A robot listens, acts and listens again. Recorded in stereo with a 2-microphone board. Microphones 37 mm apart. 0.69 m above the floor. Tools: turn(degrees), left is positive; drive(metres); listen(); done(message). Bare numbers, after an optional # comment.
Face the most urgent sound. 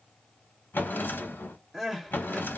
turn(30)
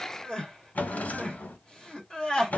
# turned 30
# So it is at 150° left.
turn(150)
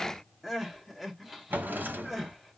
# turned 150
done("Found it: crying, straight ahead.")